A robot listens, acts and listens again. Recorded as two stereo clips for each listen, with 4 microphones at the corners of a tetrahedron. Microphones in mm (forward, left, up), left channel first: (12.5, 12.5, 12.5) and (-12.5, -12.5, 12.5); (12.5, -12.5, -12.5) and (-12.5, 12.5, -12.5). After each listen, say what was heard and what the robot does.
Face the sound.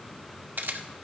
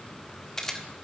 The camera shutter: 120° right. Turn 120° right.
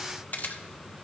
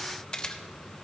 The camera shutter is now 20° left. Turn 20° left.
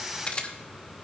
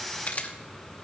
The camera shutter is now 10° right. Turn 10° right.
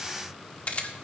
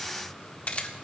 Facing the camera shutter.